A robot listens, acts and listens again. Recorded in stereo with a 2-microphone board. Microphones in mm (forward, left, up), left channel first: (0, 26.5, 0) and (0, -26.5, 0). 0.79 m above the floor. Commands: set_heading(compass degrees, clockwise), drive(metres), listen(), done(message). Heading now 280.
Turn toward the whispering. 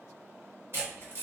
listen()
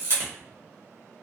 listen()
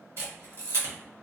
done("I can't make out whispering, only a camera shutter.")